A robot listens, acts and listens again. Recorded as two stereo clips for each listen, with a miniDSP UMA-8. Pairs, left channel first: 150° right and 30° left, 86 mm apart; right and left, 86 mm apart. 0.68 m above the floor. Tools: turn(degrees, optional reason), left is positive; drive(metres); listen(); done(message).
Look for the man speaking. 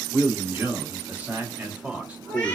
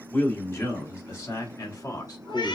turn(degrees=-45, reason="The man speaking: 45° right.")
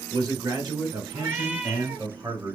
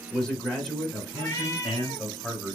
turn(degrees=-10, reason="The man speaking is now 10° right.")
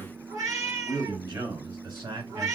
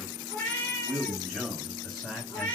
done("Found it: a man speaking, straight ahead.")